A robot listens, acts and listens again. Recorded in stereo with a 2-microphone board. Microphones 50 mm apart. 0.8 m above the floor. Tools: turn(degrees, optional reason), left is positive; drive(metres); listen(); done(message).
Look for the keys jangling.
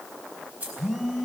turn(degrees=-30, reason="The keys jangling: about 30° right or 150° right.")
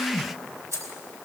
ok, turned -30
turn(degrees=-110, reason="So it is at 110° right.")
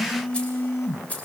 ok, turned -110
turn(degrees=30, reason="The keys jangling is now 30° left.")
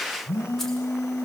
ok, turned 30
listen()
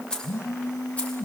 turn(degrees=30, reason="The keys jangling is now 30° left.")
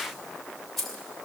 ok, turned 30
done("Found it: keys jangling, straight ahead, 2 to 4 m away.")